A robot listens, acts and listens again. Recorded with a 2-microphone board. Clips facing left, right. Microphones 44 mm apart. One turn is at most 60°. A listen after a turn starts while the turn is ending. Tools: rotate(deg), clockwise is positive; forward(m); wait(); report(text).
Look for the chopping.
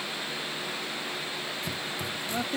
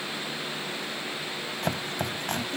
rotate(60)
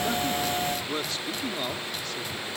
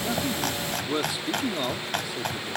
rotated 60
rotate(60)
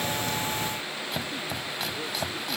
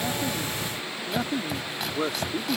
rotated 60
report("Found it: chopping, straight ahead.")